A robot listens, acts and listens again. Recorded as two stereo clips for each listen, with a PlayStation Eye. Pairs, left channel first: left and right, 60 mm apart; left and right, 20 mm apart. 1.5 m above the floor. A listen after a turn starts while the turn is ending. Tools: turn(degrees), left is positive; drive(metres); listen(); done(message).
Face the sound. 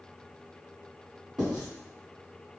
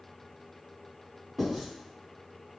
turn(degrees=-30)
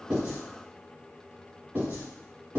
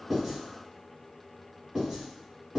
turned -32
turn(degrees=-140)
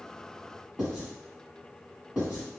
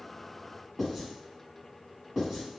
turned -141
done("Found it: writing, straight ahead.")